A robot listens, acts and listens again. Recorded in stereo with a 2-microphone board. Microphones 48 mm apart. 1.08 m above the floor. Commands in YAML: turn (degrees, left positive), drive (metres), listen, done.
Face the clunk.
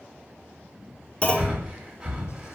turn: 25
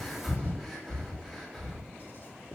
listen: true
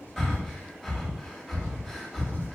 done: "I heard a clunk, but can't make it out now. It was about straight ahead or 130° left."